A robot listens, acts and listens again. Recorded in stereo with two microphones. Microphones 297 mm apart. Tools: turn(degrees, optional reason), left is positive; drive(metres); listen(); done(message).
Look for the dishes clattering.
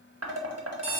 turn(degrees=-55, reason="The dishes clattering: about 55° right or 125° right.")
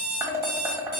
turn(degrees=-10, reason="So it is at 10° right.")
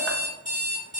listen()
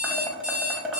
done("Facing the dishes clattering, 1 to 2 m away.")